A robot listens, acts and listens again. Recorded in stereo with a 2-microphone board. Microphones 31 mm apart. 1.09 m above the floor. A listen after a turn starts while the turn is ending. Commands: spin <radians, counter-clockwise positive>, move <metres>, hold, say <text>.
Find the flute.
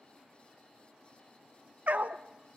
hold
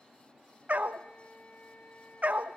spin 1.13
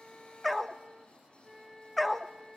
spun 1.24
say Found it: a flute, straight ahead.